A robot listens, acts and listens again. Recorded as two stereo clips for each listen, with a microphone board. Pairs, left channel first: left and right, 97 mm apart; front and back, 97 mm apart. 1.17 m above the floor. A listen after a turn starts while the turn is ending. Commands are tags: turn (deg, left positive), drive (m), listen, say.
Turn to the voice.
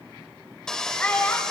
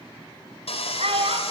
<turn deg="165"/>
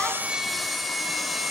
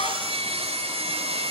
<listen/>
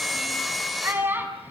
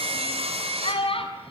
<turn deg="-20"/>
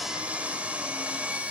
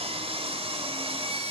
<listen/>
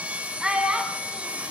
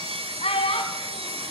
<turn deg="-10"/>
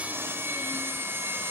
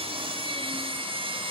<listen/>
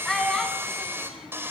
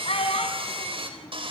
<say>Facing the child speaking, over 4 m away.</say>